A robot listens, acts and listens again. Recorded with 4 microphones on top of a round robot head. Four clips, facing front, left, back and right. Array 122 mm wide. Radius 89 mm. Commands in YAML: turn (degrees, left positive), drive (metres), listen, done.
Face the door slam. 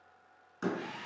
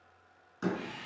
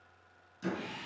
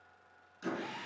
turn: 40
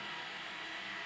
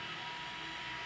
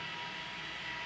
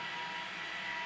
done: "I heard a door slam from this way, but can't make it out now."